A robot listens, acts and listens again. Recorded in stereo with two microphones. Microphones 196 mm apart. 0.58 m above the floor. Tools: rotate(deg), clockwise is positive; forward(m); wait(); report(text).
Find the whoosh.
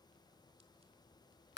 wait()
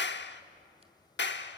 wait()
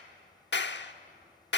report("I can't make out a whoosh to turn to.")